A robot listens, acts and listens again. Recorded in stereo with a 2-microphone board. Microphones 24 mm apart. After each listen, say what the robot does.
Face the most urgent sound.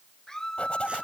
Turn 25° left.
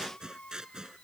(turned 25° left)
Turn 130° left.
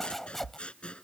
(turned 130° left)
Keep listening.
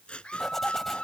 Turn 50° left.
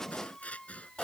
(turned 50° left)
Turn 20° left.
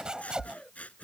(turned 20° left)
Keep listening.
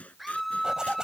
Facing the scream.